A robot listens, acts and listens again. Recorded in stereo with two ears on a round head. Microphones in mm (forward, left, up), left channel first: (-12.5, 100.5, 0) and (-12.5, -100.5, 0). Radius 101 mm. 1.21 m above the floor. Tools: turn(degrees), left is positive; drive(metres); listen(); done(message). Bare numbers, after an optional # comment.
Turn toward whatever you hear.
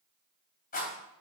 # The rattle: about 40° left or 140° left.
turn(40)
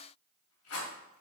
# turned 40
# So it is at 100° left.
turn(100)
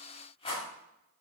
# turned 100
# The rattle is now 30° left.
turn(30)
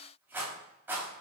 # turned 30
# The rattle is now 10° right.
turn(-10)
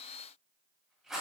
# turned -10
done("Facing the rattle, 2 to 4 m away.")